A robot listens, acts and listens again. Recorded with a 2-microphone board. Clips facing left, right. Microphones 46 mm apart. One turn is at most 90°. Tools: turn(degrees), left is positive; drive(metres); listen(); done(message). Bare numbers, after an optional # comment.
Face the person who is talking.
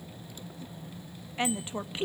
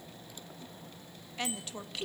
# The woman speaking: about 25° left or 155° left.
turn(25)
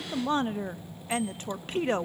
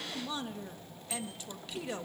# So it is at 135° left.
turn(90)
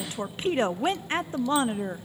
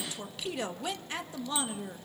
# The woman speaking is now 40° left.
turn(40)
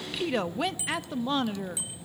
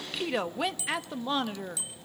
done("Facing the woman speaking, 1 to 2 m away.")